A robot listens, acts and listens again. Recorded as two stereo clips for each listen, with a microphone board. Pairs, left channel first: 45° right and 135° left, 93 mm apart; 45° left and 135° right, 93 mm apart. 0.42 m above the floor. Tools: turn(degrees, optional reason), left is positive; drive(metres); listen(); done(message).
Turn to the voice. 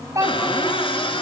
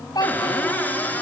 turn(degrees=85, reason="The child speaking: 85° left.")
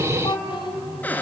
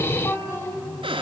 turn(degrees=-20, reason="The child speaking is now 20° right.")
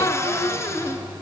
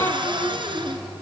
listen()
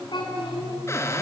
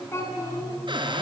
turn(degrees=-15, reason="The child speaking is now 15° right.")
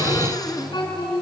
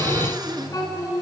done("Found it: a child speaking, straight ahead.")